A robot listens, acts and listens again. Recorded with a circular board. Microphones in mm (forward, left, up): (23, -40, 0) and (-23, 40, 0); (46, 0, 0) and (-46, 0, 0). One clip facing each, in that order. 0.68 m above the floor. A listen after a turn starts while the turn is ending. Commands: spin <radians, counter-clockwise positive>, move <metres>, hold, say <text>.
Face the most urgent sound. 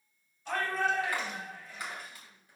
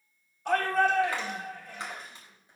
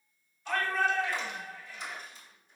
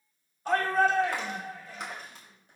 spin 2.44
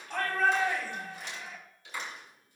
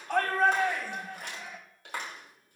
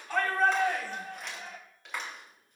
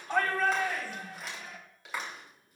spin 0.87
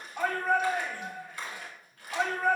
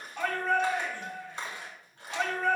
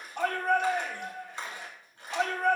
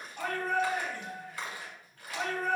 spin 0.26
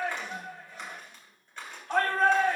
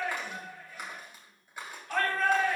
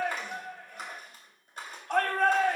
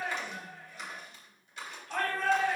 say Facing the shout, 2 to 4 m away.